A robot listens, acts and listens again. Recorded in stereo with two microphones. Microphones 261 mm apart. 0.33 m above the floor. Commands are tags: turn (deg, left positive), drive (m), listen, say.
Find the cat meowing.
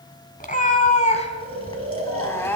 <turn deg="30"/>
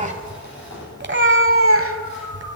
<turn deg="-55"/>
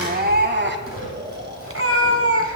<turn deg="-55"/>
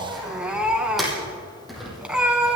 <say>Facing the cat meowing.</say>